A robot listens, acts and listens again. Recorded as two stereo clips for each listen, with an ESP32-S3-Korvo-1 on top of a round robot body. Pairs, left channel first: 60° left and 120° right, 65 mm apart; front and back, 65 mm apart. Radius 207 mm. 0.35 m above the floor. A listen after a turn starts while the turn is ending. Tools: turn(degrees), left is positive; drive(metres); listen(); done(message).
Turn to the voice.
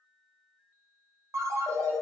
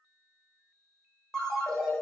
listen()
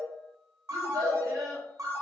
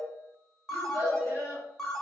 turn(degrees=-130)
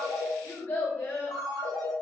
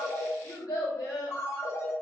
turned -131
done("Facing the child speaking, 1 to 2 m away.")